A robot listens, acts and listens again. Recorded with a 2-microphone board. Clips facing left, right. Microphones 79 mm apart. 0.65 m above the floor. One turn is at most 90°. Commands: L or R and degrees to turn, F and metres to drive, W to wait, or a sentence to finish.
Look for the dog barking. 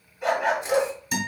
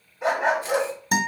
R30
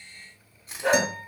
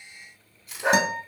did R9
R20
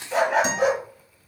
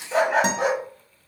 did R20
Found it: a dog barking, straight ahead, 1 to 2 m away.